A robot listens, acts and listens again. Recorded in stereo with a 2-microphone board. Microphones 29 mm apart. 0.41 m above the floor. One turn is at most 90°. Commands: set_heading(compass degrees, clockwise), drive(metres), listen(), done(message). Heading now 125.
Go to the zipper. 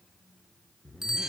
set_heading(65)
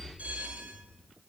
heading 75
set_heading(5)
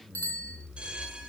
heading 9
drive(1.0)
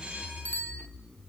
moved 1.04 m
set_heading(349)
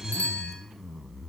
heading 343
drive(1.0)
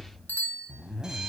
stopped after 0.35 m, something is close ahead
done("I am next to the zipper.")